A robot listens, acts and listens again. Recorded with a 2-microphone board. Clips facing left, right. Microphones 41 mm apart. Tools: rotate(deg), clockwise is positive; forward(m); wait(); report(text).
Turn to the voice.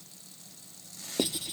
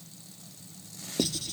wait()
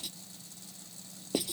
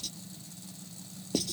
wait()
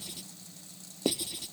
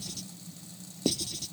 report("I can't make out anyone speaking, only writing.")